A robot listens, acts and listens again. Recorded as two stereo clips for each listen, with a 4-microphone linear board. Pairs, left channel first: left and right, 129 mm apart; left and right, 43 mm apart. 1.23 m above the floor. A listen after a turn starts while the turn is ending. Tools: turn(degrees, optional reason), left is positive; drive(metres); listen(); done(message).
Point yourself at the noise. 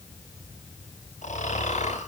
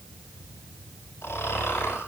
turn(degrees=90)
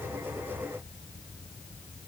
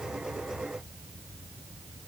listen()
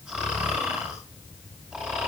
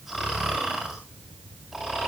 done("Facing the snoring.")